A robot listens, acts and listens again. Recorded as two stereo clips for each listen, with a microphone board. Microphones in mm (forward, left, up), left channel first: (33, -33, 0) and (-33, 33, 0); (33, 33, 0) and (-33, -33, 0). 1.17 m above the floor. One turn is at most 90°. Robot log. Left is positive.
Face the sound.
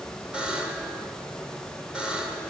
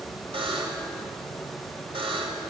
note: The buzzer: 145° right.
cmd yaw -90
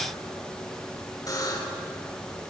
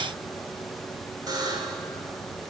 note: The buzzer is now 90° right.
cmd yaw -90
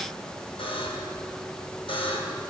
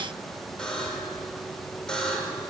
note: The buzzer is now 35° right.
cmd yaw -35
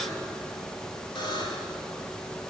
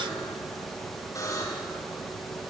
note: The buzzer is now 10° right.
cmd yaw -10
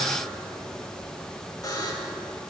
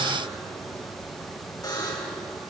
end: Facing the buzzer.